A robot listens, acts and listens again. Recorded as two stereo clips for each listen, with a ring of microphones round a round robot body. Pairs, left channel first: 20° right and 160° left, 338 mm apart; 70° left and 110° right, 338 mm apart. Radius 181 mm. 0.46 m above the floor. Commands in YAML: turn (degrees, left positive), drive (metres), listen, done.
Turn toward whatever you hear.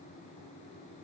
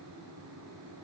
listen: true
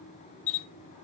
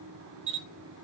turn: -55
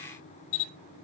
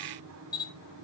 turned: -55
turn: -10
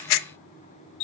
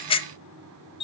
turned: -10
done: "Facing the camera shutter, under 1 m away."